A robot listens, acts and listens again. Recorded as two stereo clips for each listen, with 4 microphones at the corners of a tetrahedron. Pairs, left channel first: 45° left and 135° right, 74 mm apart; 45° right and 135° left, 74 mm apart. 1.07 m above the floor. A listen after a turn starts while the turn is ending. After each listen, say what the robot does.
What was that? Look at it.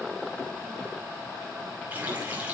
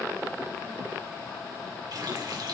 Turn 160° left.
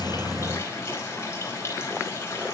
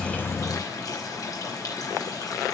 Found it: a running tap, straight ahead, over 4 m away.